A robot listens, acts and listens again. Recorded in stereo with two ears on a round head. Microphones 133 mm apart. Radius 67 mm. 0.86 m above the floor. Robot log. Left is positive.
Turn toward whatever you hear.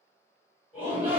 cmd yaw -30
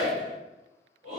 note: So it is at 140° right.
cmd yaw -140
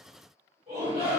note: The shout is now 45° right.
cmd yaw -45
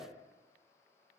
cmd idle
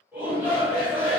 note: The shout is now 10° right.
cmd yaw -10
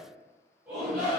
end: Found it: a shout, straight ahead.